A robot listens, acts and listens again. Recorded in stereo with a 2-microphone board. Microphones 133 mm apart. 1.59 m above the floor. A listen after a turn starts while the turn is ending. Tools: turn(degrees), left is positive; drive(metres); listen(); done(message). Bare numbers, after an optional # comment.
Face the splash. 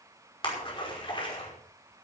# The splash: about 40° left or 140° left.
turn(40)
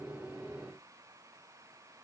listen()
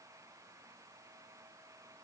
done("I heard a splash, but can't make it out now. It was about straight ahead or 100° left.")